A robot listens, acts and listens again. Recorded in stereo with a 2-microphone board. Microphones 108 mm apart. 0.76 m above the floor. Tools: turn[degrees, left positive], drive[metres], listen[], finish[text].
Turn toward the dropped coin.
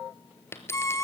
Thought: The dropped coin: about 25° left or 155° left.
Action: turn[25]
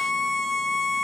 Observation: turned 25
Action: listen[]
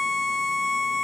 Action: finish[I heard a dropped coin, but can't make it out now. It was about straight ahead or 130° left.]